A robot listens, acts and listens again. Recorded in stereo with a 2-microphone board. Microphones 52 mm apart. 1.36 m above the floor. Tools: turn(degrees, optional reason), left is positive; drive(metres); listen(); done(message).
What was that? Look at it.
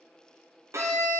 turn(degrees=-60, reason="The violin: about 60° right or 120° right.")
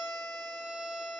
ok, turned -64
turn(degrees=-15, reason="So it is at 15° right.")
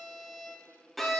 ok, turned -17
done("Facing the violin.")